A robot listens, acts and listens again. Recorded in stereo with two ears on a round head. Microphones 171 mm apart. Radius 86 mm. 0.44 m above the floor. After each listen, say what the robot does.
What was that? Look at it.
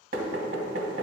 Turn 50° right.
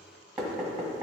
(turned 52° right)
Found it: knocking, straight ahead.